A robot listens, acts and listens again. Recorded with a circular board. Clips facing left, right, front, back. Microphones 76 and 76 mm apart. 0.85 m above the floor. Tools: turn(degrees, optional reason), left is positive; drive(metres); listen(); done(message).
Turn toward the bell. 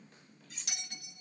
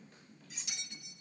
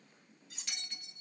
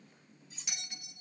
turn(degrees=105, reason="The bell: 105° left.")
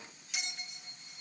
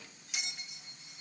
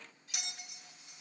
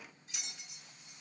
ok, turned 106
done("Facing the bell.")